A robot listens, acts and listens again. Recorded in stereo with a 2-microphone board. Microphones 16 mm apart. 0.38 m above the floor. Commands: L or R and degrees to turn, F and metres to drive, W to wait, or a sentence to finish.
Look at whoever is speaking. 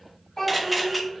L35
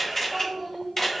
Found it: a child speaking, straight ahead, 1 to 2 m away.